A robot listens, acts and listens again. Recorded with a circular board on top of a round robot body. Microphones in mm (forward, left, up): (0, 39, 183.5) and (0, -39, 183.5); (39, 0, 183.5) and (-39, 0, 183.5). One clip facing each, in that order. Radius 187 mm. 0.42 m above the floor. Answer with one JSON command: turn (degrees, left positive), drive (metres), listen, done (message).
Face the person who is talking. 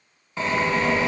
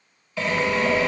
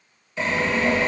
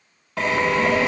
{"turn": 100}
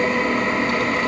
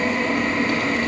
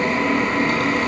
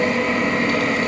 {"listen": true}
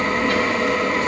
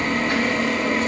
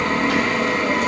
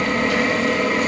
{"turn": -20}
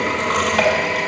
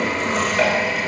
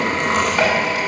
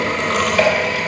{"listen": true}
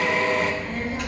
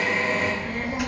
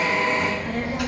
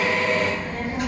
{"turn": -10}
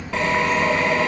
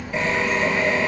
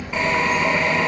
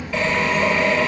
{"turn": -10}
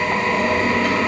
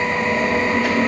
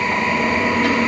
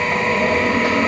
{"listen": true}
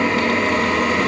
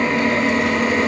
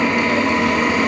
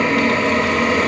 {"listen": true}
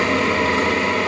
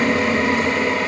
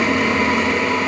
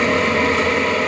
{"done": "I heard a child speaking from this way, but can't make it out now."}